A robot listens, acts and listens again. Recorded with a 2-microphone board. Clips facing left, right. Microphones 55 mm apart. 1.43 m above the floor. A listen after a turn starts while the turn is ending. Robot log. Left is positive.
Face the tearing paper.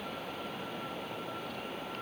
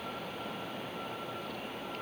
cmd idle
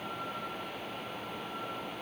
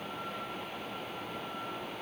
cmd idle
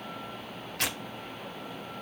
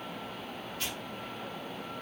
note: The tearing paper: about 70° left or 110° left.
cmd yaw +70
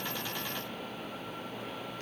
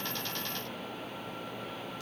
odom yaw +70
cmd idle
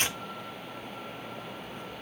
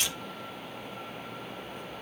note: So it is at 35° left.
cmd yaw +35
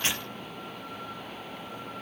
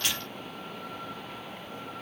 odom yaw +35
cmd idle
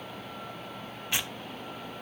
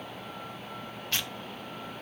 note: The tearing paper is now 15° left.
cmd yaw +15
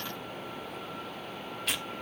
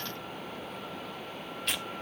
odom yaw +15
end: Found it: tearing paper, straight ahead.